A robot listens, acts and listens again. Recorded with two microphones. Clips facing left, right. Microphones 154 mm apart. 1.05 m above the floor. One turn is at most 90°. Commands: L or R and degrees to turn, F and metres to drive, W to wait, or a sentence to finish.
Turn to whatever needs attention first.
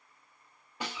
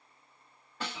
W
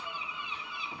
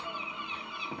W
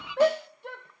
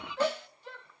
L60
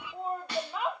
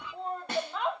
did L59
Facing the shout, under 1 m away.